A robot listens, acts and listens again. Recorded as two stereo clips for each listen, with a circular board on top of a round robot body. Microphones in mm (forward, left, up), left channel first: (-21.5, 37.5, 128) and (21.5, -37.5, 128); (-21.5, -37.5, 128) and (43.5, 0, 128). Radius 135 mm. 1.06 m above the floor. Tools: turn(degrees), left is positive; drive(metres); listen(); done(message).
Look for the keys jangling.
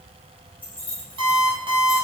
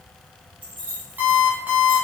turn(degrees=45)
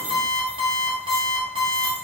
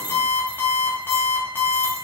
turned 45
listen()
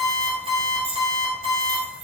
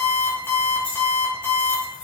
turn(degrees=-80)
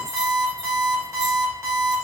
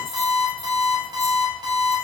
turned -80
listen()
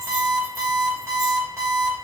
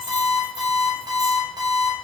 listen()
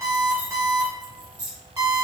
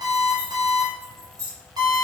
turn(degrees=-15)
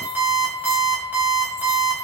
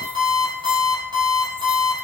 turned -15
listen()
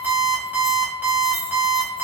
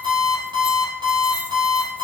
listen()
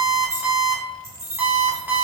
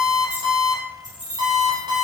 done("Facing the keys jangling, 2 to 4 m away.")